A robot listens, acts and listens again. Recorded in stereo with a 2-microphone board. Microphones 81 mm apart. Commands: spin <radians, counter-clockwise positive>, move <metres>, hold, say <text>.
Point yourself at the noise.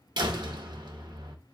spin -1.13
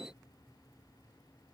hold
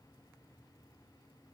say I heard a door slam, but can't make it out now. It was about straight ahead or 50° right.